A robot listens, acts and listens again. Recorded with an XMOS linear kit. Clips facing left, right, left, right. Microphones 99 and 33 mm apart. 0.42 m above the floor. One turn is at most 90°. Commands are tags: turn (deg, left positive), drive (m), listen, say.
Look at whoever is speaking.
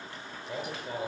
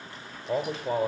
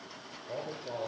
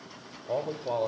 <turn deg="-35"/>
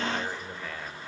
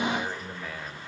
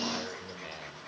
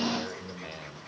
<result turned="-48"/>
<turn deg="10"/>
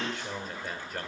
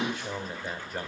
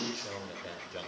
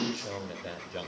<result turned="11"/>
<say>Found it: a man speaking, straight ahead, 1 to 2 m away.</say>